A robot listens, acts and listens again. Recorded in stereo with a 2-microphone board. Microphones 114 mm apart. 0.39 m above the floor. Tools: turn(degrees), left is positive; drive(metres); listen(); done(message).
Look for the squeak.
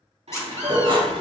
turn(degrees=25)
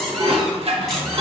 listen()
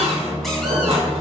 listen()
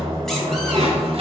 done("I heard a squeak, but can't make it out now. It was about straight ahead or 130° left.")